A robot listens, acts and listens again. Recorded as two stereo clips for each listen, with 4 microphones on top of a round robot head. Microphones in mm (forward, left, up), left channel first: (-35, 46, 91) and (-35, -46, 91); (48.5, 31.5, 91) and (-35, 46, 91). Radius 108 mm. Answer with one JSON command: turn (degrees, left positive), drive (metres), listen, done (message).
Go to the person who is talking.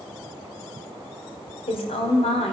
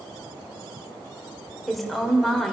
{"turn": 80}
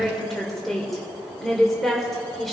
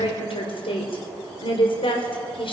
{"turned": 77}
{"drive": 1.0}
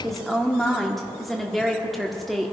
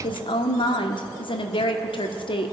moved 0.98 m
{"drive": 1.0}
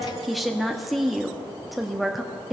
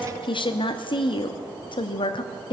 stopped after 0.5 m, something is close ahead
{"done": "Arrived at the woman speaking, straight ahead."}